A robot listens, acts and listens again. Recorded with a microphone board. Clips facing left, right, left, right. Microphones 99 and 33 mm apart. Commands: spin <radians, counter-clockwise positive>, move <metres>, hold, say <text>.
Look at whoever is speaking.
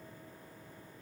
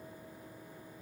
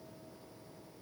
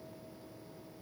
hold
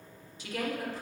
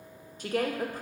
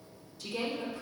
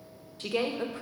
spin -0.87
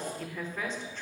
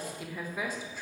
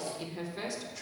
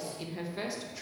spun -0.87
spin -0.17
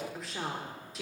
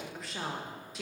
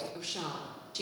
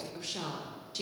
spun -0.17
say Found it: a woman speaking, straight ahead.